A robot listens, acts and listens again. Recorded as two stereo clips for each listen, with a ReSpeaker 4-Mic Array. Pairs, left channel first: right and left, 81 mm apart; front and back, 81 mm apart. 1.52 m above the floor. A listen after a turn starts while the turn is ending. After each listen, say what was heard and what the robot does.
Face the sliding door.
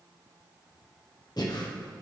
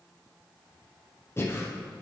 Keep listening.
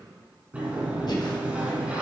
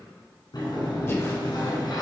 The sliding door: 20° left. Turn 20° left.
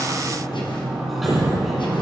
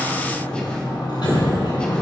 Facing the sliding door.